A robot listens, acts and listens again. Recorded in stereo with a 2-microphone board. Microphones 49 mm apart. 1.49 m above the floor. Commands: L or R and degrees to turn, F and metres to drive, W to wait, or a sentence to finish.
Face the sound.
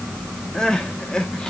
L30
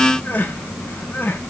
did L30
L130
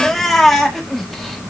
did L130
Found it: crying, straight ahead.